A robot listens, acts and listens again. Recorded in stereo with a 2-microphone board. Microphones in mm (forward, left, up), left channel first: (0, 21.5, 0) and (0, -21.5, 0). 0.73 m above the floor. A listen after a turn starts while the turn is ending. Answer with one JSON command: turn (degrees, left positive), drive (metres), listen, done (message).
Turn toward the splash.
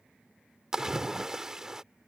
{"turn": -30}
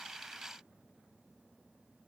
{"listen": true}
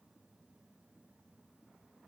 {"done": "I heard a splash, but can't make it out now. It was about 15° left or 135° right."}